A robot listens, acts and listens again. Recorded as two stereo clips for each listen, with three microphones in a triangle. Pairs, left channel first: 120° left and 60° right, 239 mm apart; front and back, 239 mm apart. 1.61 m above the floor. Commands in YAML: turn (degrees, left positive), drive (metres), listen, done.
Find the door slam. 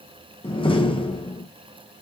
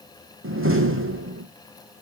turn: -175
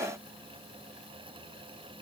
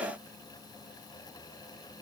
done: "Facing where the door slam came from. I can't hear it now."